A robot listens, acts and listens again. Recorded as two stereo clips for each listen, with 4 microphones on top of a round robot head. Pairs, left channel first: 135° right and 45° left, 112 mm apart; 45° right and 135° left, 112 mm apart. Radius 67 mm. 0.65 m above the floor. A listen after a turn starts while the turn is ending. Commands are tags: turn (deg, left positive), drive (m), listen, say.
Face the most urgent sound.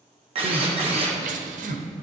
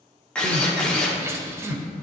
<turn deg="65"/>
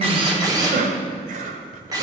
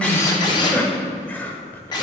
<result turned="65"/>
<turn deg="30"/>
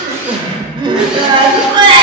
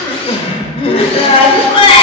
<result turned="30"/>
<say>Facing the crying, under 1 m away.</say>